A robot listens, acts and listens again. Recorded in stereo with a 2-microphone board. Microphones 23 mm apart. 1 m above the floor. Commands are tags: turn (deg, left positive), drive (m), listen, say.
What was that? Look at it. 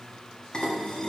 <turn deg="45"/>
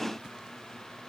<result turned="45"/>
<listen/>
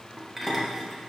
<say>Found it: dishes clattering, straight ahead, 1 to 2 m away.</say>